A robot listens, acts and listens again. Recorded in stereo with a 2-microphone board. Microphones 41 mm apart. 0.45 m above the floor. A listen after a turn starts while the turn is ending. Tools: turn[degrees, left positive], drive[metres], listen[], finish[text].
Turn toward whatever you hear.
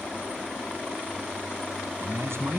Thought: The man speaking: about 70° right or 110° right.
Action: turn[-70]
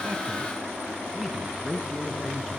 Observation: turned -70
Action: finish[Facing the man speaking.]